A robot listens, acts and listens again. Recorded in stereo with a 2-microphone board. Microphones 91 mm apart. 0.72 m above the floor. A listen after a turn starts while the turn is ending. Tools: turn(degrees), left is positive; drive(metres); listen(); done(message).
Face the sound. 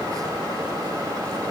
listen()
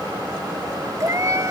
turn(degrees=-35)
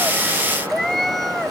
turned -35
done("Found it: a cat meowing, straight ahead.")